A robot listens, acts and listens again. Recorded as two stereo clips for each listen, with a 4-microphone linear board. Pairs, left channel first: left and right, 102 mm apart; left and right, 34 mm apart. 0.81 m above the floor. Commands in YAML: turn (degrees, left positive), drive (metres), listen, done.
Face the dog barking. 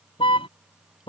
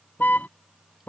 listen: true
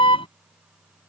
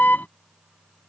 listen: true
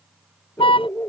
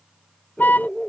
turn: 25
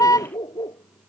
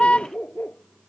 turn: 130
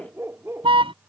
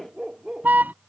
turn: -25
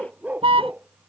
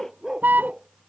turn: -15
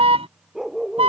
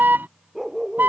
done: "Facing the dog barking."